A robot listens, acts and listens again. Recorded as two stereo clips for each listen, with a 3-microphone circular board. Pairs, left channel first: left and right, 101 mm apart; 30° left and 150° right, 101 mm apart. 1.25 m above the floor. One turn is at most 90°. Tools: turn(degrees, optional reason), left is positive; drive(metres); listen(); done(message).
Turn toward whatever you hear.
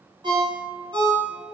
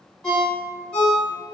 turn(degrees=-55, reason="The ringtone: 55° right.")
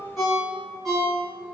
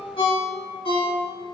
done("Facing the ringtone.")